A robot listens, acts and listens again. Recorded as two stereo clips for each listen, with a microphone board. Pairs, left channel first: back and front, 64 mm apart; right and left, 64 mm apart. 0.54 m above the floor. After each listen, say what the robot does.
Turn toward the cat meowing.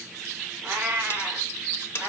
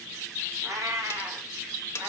Turn 65° left.
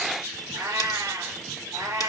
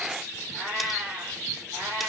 Turn 20° left.
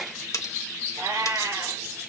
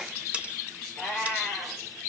Found it: a cat meowing, straight ahead, over 4 m away.